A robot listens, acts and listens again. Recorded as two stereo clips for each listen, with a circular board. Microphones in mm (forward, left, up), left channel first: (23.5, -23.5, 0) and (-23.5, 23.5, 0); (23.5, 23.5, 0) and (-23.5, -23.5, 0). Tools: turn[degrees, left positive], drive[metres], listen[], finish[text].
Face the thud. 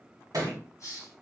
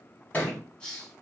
Thought: The thud: 110° left.
Action: turn[110]
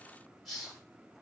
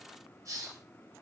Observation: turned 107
Action: finish[I heard a thud from this way, but can't make it out now.]